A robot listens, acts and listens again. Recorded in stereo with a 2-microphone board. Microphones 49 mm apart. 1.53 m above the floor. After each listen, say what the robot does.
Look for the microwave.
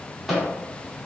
Turn 30° right.
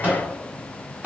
Turn 145° right.
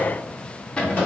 Turn 30° left.
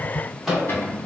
Found it: a microwave, straight ahead.